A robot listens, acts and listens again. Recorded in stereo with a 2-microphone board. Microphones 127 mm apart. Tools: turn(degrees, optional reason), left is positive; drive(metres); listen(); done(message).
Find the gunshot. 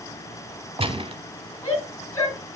turn(degrees=-50, reason="The gunshot: about 50° right or 130° right.")
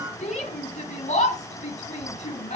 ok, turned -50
listen()
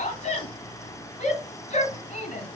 done("I heard a gunshot, but can't make it out now. It was about straight ahead or 80° right.")